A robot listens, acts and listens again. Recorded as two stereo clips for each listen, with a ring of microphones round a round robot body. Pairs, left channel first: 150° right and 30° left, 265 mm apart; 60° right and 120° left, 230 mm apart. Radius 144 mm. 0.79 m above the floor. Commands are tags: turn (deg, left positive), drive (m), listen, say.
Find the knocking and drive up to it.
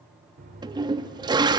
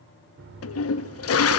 <turn deg="90"/>
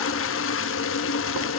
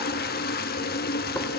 <listen/>
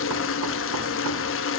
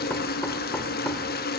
<listen/>
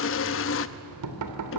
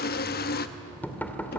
<turn deg="20"/>
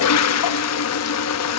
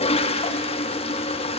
<listen/>
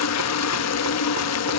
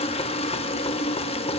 <listen/>
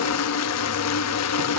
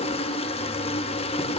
<say>I heard knocking from this way, but can't make it out now. I did not reach it.</say>